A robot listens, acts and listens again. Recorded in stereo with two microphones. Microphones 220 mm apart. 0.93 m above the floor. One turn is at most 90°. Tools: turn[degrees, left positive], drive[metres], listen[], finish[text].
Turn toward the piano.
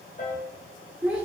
Thought: The piano: about 45° left or 135° left.
Action: turn[45]
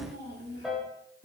Action: finish[Found it: a piano, straight ahead.]